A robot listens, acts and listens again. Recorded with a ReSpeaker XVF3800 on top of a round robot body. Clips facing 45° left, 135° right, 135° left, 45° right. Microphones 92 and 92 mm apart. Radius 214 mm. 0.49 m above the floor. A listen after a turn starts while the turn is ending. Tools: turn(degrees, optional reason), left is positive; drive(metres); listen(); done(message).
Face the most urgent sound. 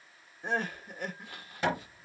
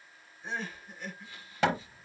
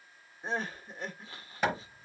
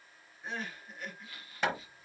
turn(degrees=80, reason="The crying: 80° left.")
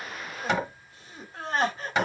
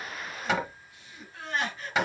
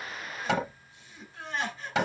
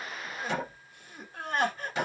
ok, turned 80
done("Found it: crying, straight ahead.")